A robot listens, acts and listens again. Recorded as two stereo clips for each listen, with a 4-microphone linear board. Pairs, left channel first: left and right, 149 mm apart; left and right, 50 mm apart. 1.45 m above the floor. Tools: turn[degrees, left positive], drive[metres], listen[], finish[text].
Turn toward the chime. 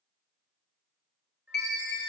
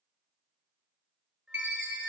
Thought: The chime: about 55° right or 125° right.
Action: turn[-55]
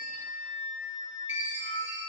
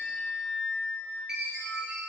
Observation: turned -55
Thought: So it is at 15° right.
Action: turn[-15]
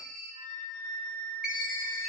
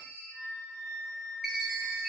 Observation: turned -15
Action: finish[Found it: a chime, straight ahead.]